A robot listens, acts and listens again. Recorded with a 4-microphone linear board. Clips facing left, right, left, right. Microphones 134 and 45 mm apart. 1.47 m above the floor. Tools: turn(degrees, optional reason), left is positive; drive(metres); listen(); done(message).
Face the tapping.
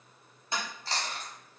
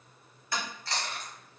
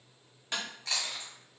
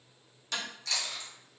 turn(degrees=25, reason="The tapping: about 25° left or 155° left.")
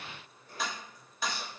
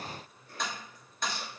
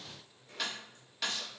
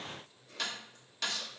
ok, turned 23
done("Found it: tapping, straight ahead, 1 to 2 m away.")